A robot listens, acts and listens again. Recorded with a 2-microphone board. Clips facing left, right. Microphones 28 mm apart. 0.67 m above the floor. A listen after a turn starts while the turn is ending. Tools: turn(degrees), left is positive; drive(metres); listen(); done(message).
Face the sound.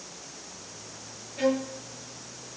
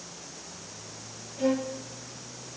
turn(degrees=65)
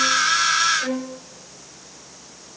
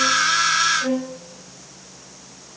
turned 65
turn(degrees=50)
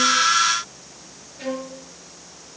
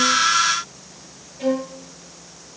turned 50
turn(degrees=25)
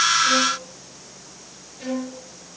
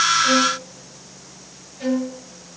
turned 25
turn(degrees=-10)
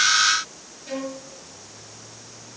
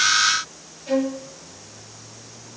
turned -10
done("Found it: a violin, straight ahead, over 4 m away.")